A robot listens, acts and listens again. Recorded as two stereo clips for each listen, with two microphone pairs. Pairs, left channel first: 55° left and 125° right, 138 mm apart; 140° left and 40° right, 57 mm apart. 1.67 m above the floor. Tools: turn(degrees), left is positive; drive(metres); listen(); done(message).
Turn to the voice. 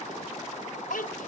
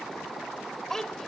turn(degrees=60)
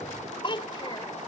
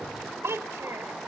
done("Found it: a child speaking, straight ahead.")